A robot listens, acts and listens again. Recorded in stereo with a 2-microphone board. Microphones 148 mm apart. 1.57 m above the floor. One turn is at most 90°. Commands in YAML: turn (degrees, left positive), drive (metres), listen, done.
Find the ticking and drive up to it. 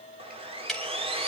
turn: 30
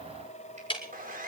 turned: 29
turn: 90
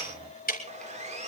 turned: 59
turn: 85
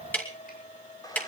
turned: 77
turn: 10
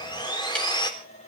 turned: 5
listen: true
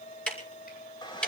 drive: 1.0
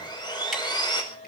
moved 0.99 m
listen: true
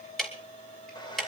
drive: 1.0
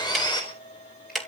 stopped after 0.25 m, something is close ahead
done: "Something is in my way. I am facing the ticking but have not reached it."